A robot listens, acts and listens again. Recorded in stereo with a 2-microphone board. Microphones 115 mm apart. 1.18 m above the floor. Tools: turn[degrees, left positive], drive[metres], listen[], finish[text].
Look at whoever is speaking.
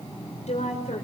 Thought: The woman speaking: about 70° left or 110° left.
Action: turn[70]
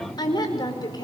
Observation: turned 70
Thought: So it is at 35° left.
Action: turn[35]
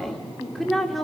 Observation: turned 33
Action: finish[Facing the woman speaking.]